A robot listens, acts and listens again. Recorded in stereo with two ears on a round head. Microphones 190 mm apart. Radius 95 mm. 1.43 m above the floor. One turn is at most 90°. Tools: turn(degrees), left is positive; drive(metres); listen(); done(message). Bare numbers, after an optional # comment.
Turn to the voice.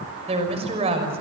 # The woman speaking: about 30° right or 150° right.
turn(-30)
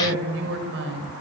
# So it is at 120° right.
turn(-90)
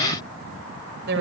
# The woman speaking is now 55° right.
turn(-55)
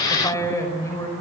# The woman speaking is now 15° left.
turn(15)
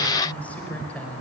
done("Facing the woman speaking.")